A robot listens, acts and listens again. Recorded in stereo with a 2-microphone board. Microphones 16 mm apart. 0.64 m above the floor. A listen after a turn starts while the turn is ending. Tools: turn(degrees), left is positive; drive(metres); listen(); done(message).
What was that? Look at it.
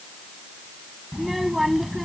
turn(degrees=-30)
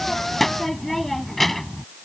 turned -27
turn(degrees=15)
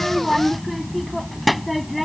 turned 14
done("Facing the child speaking.")